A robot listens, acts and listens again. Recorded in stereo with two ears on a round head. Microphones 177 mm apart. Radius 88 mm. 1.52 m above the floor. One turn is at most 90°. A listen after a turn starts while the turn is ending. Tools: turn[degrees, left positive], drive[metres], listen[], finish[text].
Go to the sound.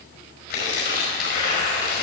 Thought: The tearing paper: about 50° left or 130° left.
Action: turn[50]
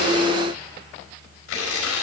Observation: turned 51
Thought: So it is at 80° left.
Action: turn[80]
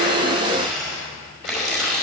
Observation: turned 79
Action: drive[1.0]
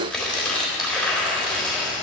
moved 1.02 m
Action: drive[1.0]
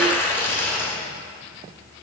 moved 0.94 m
Thought: The tearing paper is now 15° left.
Action: turn[15]
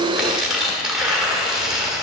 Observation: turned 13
Action: drive[1.0]
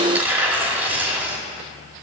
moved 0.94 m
Thought: The tearing paper is now 10° right.
Action: turn[-10]
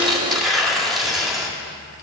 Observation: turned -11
Action: drive[1.0]
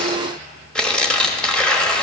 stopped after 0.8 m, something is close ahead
Action: finish[I am next to the tearing paper.]